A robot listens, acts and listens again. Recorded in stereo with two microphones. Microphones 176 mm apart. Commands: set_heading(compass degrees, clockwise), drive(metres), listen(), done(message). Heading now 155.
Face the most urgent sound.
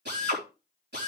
listen()
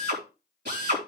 listen()
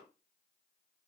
done("I can't make out anything urgent, only a drill.")